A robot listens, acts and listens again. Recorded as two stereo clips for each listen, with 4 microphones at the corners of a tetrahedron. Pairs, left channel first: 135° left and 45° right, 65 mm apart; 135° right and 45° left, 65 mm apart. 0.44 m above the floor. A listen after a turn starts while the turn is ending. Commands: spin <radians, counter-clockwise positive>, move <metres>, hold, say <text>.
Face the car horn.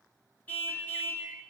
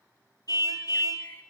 spin -2.79
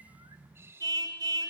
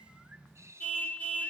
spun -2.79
spin -1.13
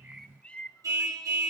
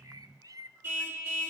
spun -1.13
spin -0.17
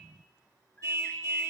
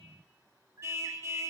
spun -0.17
say Facing the car horn.